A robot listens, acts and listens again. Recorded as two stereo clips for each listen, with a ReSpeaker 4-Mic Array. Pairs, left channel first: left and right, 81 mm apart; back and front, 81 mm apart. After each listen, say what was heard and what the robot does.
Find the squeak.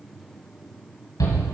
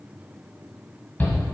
Keep listening.
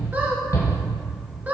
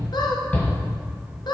The squeak: 160° right. Turn 160° right.
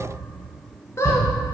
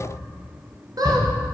The squeak is now 35° left. Turn 35° left.
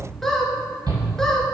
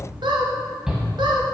Facing the squeak, 1 to 2 m away.